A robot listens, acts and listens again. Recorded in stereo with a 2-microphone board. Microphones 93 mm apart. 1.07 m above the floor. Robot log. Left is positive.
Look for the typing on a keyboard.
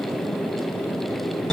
cmd idle
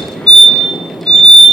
cmd idle
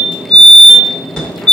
end: I can't make out typing on a keyboard, only a fire alarm.